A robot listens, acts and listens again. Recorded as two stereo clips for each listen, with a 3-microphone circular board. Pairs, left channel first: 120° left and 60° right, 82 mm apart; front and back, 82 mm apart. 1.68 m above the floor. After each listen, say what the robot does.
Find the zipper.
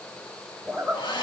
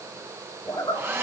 Turn 35° left.
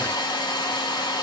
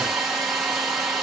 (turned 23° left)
Turn 15° left.
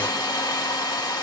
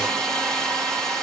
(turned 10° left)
Keep listening.
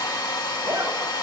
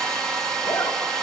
Facing where the zipper came from. I can't hear it now.